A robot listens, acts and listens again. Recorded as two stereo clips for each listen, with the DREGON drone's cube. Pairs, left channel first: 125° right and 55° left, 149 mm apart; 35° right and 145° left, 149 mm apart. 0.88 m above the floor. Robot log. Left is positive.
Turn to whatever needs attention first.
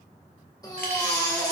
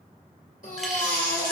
note: The baby crying: 60° right.
cmd yaw -60
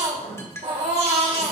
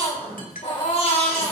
note: The baby crying is now 10° left.
cmd yaw +10
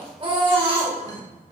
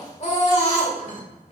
end: Facing the baby crying.